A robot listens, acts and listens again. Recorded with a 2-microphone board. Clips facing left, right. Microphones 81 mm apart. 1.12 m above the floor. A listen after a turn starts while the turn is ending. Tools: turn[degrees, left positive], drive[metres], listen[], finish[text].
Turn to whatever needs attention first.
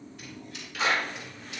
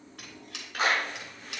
Action: listen[]
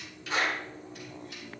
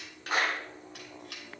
Action: listen[]
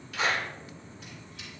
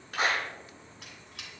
Action: finish[I can't make out anything urgent, only a squeak and a clap.]